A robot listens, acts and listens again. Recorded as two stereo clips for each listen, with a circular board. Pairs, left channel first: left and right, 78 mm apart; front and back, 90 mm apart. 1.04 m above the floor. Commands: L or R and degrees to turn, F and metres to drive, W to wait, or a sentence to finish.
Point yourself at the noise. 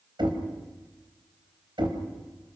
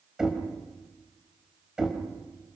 R100
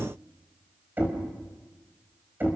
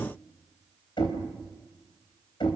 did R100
R25
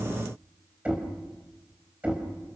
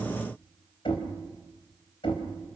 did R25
R15
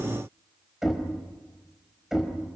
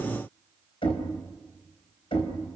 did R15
Found it: knocking, straight ahead.